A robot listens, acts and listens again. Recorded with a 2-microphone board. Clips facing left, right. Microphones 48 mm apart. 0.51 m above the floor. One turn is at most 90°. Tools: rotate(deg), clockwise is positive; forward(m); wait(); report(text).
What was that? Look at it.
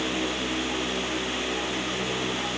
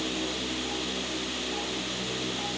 wait()
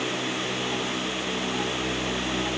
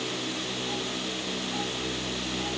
wait()
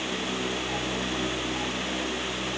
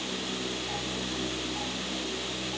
report("I can't make out anything to turn to.")